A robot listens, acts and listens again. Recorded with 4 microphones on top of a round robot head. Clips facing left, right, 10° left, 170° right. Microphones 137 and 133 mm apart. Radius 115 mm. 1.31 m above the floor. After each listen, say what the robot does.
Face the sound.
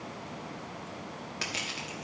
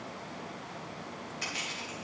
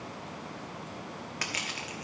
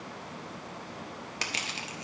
Turn 130° left.
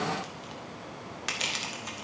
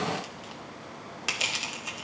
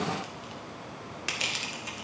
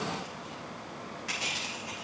Turn 10° right.
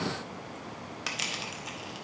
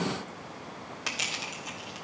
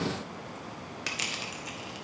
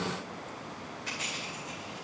Found it: crushing, straight ahead, 1 to 2 m away.